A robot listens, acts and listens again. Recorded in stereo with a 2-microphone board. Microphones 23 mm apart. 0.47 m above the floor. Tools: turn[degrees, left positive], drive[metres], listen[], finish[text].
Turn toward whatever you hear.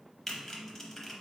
Action: turn[30]
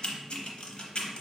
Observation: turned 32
Thought: So it is at 135° left.
Action: turn[135]
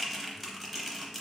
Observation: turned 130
Action: finish[Facing the typing on a keyboard, under 1 m away.]